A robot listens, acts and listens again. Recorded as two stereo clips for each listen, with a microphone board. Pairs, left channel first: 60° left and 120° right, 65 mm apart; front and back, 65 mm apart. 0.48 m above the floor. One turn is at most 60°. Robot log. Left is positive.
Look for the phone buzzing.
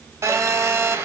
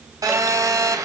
note: The phone buzzing: 160° right.
cmd yaw -60
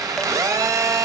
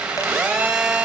note: The phone buzzing is now 105° right.
cmd yaw -60
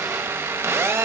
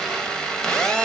note: The phone buzzing is now 75° right.
cmd yaw -60
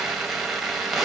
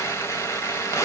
note: The phone buzzing is now 35° right.
cmd yaw -35
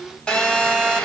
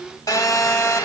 note: The phone buzzing is now 15° right.
cmd yaw -15
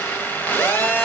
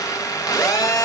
end: Found it: a phone buzzing, straight ahead.